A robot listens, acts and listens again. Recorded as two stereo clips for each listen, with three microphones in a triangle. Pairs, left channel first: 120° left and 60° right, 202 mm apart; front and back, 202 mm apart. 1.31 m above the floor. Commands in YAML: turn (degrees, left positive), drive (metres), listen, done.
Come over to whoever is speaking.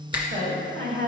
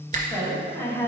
turn: -75
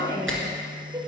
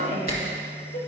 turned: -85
turn: 10
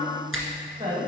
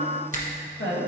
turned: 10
drive: 1.0
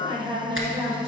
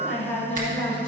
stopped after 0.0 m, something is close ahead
done: "Blocked. The woman speaking is further on, straight ahead."